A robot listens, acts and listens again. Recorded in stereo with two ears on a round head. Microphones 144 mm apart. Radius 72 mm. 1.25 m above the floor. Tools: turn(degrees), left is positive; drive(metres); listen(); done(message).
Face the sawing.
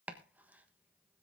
listen()
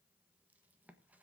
listen()
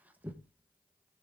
done("I can't make out sawing, only chopping.")